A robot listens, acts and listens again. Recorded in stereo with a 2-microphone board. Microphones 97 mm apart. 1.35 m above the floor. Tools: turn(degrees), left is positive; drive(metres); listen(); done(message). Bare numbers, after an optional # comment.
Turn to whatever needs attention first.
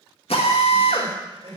# The crying: about 60° right or 120° right.
turn(-60)
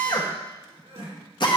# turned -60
# So it is at 60° right.
turn(-60)
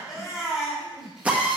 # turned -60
done("Facing the crying, 2 to 4 m away.")